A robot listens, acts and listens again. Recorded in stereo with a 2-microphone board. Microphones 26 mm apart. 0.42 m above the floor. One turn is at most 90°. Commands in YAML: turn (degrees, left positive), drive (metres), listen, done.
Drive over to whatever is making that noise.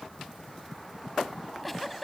turn: 30
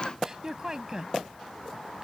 turn: -25
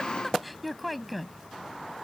drive: 1.0
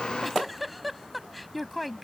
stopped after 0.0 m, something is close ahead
done: "Something is in my way. I am facing the giggle but have not reached it."